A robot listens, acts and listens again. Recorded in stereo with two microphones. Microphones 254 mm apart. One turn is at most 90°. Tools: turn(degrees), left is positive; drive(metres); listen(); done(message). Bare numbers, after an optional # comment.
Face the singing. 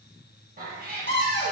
listen()
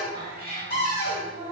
turn(-90)
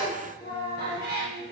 # So it is at 20° left.
turn(20)
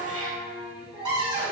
done("Facing the singing.")